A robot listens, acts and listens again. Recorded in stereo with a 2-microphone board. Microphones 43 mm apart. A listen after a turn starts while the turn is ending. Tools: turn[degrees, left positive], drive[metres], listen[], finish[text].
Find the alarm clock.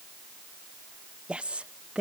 Action: listen[]
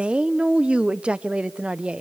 Action: listen[]
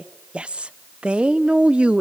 Action: finish[I can't make out an alarm clock, only a woman speaking.]